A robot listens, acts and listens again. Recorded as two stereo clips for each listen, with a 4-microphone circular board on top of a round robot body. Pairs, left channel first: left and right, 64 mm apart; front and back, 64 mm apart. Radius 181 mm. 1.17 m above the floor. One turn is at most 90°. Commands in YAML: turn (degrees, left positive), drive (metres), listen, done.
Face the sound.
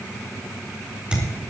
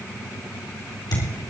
turn: -15
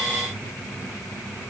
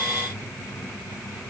done: "I heard a thud from this way, but can't make it out now."